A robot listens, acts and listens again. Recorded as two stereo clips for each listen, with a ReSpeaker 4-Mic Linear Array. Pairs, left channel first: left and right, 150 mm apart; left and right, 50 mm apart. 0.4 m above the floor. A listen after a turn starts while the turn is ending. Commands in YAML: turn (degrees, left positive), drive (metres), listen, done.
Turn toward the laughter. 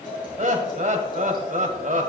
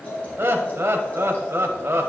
turn: -55
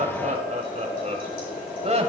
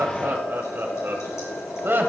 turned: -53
turn: -55
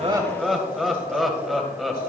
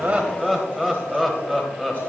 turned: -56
done: "Found it: laughter, straight ahead."